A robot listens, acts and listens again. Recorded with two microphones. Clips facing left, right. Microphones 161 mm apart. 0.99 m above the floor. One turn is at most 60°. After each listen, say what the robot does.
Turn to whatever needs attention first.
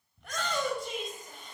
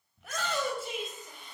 Turn 30° right.
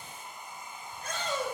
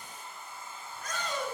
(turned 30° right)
Turn 25° left.
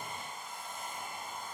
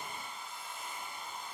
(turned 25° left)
Keep listening.
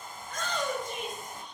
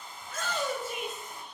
Facing the shout, over 4 m away.